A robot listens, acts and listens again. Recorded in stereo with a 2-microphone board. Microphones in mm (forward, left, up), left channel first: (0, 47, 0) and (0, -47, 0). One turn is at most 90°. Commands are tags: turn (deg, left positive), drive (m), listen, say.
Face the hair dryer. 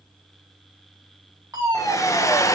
<turn deg="35"/>
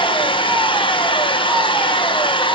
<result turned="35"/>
<turn deg="90"/>
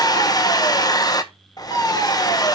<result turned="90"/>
<turn deg="45"/>
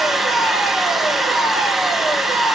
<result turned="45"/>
<say>Found it: a hair dryer, straight ahead.</say>